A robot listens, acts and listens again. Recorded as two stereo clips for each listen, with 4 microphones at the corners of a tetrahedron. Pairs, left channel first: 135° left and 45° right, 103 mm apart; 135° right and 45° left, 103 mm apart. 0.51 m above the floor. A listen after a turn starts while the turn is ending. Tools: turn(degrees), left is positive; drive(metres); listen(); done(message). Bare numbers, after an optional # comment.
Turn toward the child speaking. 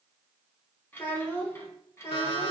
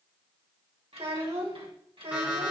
# The child speaking: 70° left.
turn(70)
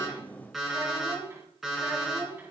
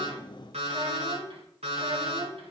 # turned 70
# The child speaking is now 25° left.
turn(25)
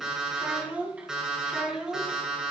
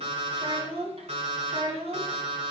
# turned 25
# The child speaking is now 35° left.
turn(35)
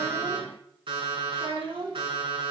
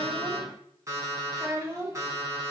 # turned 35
# The child speaking is now 15° right.
turn(-15)
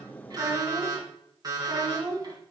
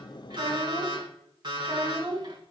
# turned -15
done("Found it: a child speaking, straight ahead.")